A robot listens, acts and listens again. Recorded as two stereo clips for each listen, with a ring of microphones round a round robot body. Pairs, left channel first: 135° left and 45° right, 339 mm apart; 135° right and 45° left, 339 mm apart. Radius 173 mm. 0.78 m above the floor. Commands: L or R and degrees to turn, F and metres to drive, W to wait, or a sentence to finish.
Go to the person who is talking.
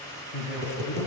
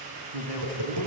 L75
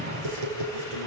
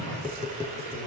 L15
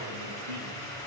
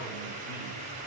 W
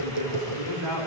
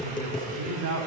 F1.0
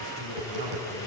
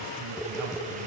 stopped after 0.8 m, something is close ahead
Something is in my way. I am facing the man speaking but have not reached it.